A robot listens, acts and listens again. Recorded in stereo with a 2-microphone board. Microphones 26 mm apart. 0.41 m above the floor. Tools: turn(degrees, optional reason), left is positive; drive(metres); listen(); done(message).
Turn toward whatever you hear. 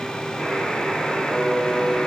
turn(degrees=45, reason="The buzzer: about 45° left or 135° left.")
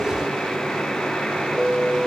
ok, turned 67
turn(degrees=65, reason="So it is at 65° left.")
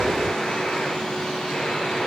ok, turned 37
turn(degrees=30, reason="Nothing new. It was at 30° left.")
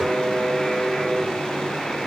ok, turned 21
turn(degrees=10, reason="The buzzer is now 10° left.")
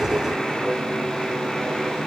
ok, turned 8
done("Found it: a buzzer, straight ahead, over 4 m away.")